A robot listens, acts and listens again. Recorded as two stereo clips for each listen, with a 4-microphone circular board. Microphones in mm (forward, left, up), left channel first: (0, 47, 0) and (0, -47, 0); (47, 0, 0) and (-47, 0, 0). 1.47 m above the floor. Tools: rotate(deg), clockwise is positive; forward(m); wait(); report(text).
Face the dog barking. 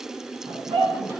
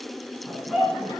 rotate(90)
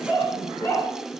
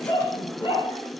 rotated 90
rotate(-20)
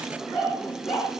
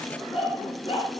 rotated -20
rotate(-15)
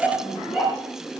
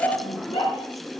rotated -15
report("Found it: a dog barking, straight ahead, over 4 m away.")